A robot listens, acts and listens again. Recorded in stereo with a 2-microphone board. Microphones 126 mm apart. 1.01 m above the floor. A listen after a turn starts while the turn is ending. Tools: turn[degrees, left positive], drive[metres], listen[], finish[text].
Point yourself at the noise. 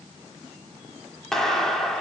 Action: turn[30]
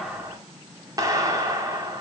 Thought: So it is at 30° right.
Action: turn[-30]
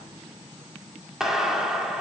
Action: finish[Facing the clap, 2 to 4 m away.]